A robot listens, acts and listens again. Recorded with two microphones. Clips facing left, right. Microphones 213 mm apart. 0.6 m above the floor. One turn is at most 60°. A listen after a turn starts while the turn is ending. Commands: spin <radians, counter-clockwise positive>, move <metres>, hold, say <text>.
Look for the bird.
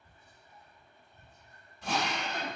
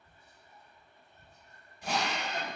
hold
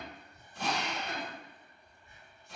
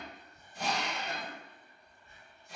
hold
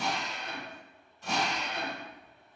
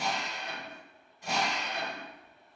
say I can't make out a bird to turn to.